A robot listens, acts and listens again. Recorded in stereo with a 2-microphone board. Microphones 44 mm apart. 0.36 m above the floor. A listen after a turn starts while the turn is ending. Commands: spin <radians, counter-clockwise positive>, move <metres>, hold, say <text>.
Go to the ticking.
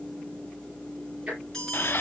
spin -0.52
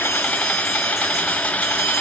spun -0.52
hold
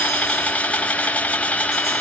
hold
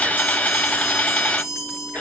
say I heard ticking, but can't make it out now. It was about straight ahead or 120° right. I did not reach it.